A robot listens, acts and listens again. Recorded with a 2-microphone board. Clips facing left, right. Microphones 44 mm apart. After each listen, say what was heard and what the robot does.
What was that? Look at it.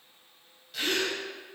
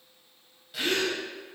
Turn 30° right.
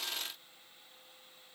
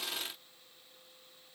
Keep listening.
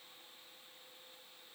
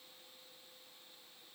I heard a gasp, but can't make it out now. It was about 20° left or 140° right.